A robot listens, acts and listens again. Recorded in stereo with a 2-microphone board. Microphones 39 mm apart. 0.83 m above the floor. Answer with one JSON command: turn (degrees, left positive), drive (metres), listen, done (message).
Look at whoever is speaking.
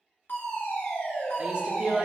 {"turn": -25}
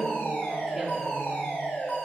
{"listen": true}
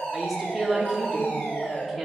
{"done": "Facing the woman speaking, 2 to 4 m away."}